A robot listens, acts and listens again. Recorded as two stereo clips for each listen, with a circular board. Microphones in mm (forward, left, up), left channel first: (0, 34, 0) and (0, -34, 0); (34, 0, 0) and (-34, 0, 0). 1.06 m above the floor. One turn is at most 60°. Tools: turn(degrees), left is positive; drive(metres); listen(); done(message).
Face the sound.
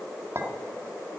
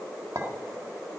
turn(degrees=-60)
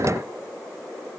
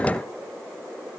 turn(degrees=-60)
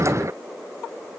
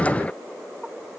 turn(degrees=-20)
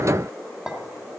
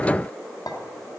turn(degrees=-10)
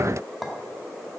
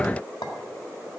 done("Facing the clink, 1 to 2 m away.")